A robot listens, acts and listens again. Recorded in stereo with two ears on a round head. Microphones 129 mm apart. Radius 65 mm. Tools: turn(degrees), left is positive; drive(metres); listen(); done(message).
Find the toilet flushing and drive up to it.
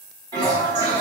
turn(degrees=-30)
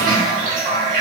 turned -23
turn(degrees=-125)
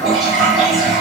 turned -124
drive(metres=1.0)
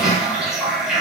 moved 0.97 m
drive(metres=1.0)
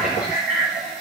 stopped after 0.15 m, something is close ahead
done("I am next to the toilet flushing.")